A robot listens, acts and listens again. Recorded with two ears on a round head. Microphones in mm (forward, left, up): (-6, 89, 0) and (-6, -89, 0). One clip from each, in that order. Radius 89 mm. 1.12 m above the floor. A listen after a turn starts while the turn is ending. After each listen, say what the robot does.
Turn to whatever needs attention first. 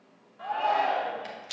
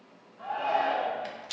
Turn 30° left.
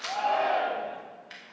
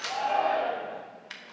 Turn 120° left.
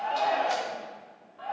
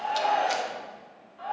Facing the shout.